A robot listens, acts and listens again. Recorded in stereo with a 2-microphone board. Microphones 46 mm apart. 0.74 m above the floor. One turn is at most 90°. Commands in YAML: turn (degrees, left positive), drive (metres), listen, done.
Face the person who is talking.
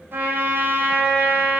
listen: true
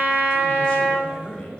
turn: 25
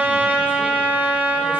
listen: true
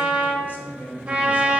turn: 90
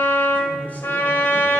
turn: 30
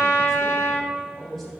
done: "Found it: a man speaking, straight ahead."